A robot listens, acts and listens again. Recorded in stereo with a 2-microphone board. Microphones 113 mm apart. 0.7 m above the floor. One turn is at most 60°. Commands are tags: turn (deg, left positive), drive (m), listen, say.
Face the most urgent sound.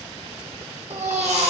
<turn deg="-60"/>
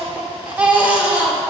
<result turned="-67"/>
<turn deg="-15"/>
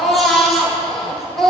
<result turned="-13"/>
<say>Facing the baby crying, 1 to 2 m away.</say>